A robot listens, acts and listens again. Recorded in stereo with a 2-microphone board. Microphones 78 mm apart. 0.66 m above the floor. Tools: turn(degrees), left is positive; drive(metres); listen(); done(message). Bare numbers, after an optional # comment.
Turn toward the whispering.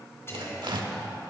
# The whispering: about 35° left or 145° left.
turn(35)
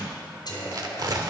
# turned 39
# So it is at 105° left.
turn(105)
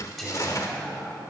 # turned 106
done("Facing the whispering, 2 to 4 m away.")